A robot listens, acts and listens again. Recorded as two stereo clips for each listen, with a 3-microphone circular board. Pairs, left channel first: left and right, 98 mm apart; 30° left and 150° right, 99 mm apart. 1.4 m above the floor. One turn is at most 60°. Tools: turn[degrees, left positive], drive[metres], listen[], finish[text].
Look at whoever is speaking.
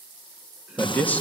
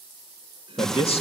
Thought: The man speaking: 15° left.
Action: turn[15]
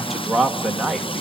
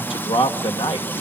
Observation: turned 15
Action: finish[Facing the man speaking, 2 to 4 m away.]